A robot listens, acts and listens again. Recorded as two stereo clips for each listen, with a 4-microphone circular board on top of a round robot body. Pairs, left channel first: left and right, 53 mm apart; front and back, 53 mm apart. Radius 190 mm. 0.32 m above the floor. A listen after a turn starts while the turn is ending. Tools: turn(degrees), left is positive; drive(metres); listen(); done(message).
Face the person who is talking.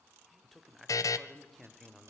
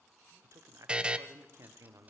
turn(degrees=175)
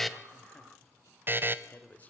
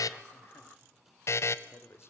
turn(degrees=30)
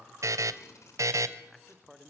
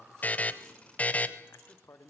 done("Found it: a man speaking, straight ahead, 2 to 4 m away.")